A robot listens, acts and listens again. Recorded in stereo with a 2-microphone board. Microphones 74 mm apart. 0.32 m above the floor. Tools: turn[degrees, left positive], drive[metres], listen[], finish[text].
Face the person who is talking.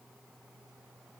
Action: listen[]
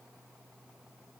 Action: listen[]
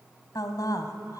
Thought: The woman speaking: about 60° left or 120° left.
Action: turn[60]
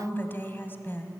Thought: So it is at 35° left.
Action: turn[35]
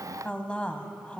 Thought: The woman speaking is now 20° left.
Action: turn[20]
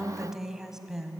Action: finish[Found it: a woman speaking, straight ahead.]